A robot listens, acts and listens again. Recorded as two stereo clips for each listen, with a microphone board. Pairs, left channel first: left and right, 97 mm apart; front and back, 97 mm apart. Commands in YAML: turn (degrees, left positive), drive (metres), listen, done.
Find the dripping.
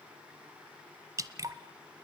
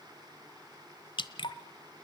turn: -35
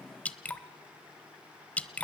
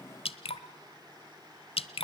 turn: 15
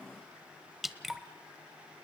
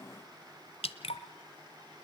done: "Facing the dripping, 1 to 2 m away."